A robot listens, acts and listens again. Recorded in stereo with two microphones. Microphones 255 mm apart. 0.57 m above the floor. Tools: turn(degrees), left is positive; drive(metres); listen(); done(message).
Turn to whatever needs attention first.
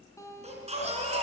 turn(degrees=-25)
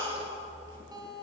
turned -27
turn(degrees=-130)
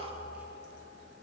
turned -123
done("Facing the baby crying, over 4 m away.")